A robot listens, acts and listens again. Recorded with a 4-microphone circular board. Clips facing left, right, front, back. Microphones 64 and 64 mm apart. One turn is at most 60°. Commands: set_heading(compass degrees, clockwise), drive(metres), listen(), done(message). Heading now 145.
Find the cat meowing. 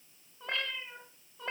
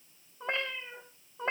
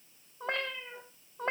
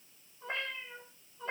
set_heading(180)
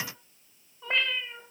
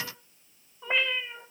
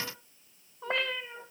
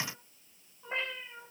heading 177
set_heading(192)
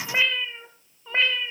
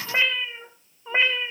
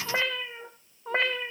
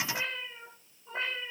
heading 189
set_heading(209)
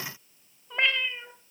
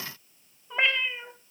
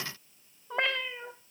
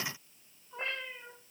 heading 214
set_heading(229)
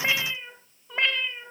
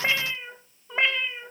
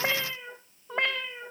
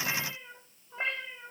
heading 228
set_heading(243)
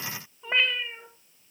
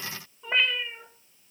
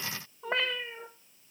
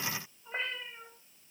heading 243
done("Facing the cat meowing.")